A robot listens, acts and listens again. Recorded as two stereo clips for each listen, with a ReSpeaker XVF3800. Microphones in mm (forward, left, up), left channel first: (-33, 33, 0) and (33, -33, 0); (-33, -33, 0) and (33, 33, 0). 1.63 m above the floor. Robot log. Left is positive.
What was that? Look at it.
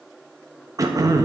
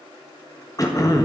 note: The throat clearing: 90° right.
cmd yaw -90
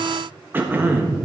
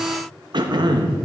note: The throat clearing is now 20° left.
cmd yaw +20
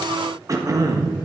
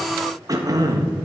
end: Facing the throat clearing.